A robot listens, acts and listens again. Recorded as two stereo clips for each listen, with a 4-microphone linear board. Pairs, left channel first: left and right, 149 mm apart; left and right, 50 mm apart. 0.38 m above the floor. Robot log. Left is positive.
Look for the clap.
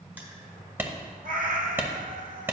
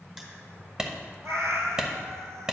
cmd yaw -30
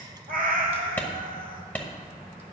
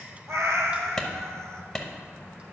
note: So it is at 10° left.
cmd yaw +10
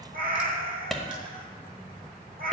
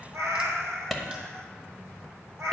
end: Found it: a clap, straight ahead, 1 to 2 m away.